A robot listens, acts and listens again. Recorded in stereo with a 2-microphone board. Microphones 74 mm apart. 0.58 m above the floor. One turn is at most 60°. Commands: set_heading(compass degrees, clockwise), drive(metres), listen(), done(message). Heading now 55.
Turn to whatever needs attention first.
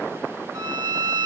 listen()
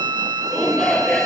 set_heading(25)
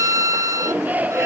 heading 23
set_heading(43)
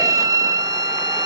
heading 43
listen()
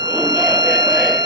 listen()
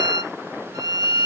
done("Facing where the shout came from. I can't hear it now.")